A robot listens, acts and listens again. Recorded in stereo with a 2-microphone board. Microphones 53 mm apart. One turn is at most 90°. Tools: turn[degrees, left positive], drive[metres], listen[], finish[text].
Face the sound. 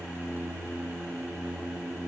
Action: listen[]
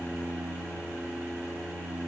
Action: listen[]
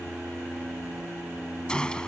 Action: turn[30]
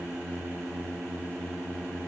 Action: listen[]
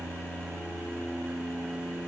Action: finish[I heard a gunshot, but can't make it out now. It was about 15° right or 135° left.]